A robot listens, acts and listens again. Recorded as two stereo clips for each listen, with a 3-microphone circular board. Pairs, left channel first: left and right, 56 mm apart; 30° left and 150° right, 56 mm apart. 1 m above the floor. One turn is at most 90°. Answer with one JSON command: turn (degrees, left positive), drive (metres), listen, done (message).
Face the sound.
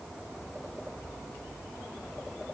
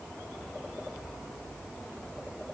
{"listen": true}
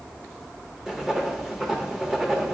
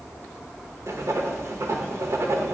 {"turn": -90}
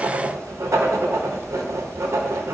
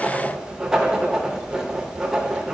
{"turn": -70}
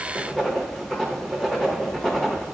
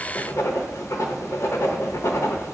{"done": "Found it: writing, straight ahead, under 1 m away."}